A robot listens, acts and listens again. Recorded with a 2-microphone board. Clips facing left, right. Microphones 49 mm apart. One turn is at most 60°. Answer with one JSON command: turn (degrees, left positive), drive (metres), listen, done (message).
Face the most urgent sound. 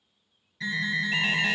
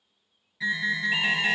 {"turn": -30}
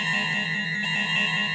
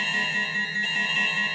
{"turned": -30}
{"turn": 20}
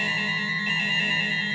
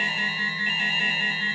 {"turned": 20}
{"done": "Found it: an alarm, straight ahead."}